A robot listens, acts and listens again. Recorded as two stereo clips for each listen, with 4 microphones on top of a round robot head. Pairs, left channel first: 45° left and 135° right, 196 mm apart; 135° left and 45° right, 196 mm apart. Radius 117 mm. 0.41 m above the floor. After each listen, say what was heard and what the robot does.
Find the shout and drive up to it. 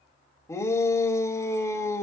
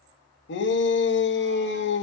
The shout: 120° left. Turn 120° left.
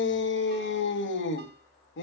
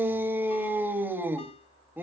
The shout is now 35° left. Turn 35° left.
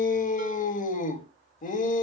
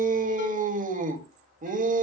Drive 1.0 m forward.
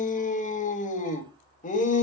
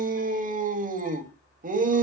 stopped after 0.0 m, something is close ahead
Blocked. The shout is further on, straight ahead.